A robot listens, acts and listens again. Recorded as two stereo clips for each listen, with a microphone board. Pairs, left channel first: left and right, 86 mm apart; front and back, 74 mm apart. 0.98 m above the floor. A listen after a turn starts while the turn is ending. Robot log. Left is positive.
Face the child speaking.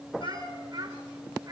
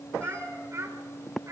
note: The child speaking: 135° right.
cmd yaw -135
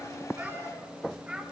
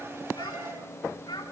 note: The child speaking is now 10° right.
cmd yaw -10
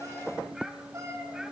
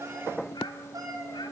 cmd idle
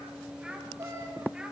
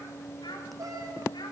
cmd idle
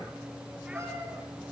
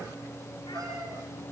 end: Facing where the child speaking came from. I can't hear it now.